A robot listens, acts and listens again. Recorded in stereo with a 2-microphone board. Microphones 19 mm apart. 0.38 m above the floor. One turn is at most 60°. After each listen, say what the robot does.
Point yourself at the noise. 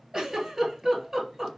Turn 30° right.
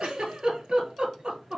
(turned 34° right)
Turn 60° right.
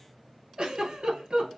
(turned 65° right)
Turn 55° right.
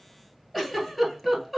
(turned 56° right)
Facing the giggle, 1 to 2 m away.